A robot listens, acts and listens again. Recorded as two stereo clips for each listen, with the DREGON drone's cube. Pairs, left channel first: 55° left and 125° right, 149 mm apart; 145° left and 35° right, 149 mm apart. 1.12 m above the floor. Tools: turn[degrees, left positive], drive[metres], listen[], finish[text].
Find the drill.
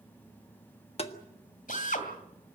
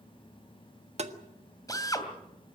Thought: The drill: 80° left.
Action: turn[80]
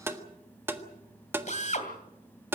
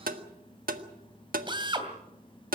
Thought: The drill is now 20° left.
Action: turn[20]
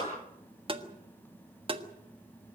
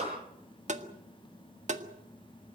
Action: finish[Facing the drill.]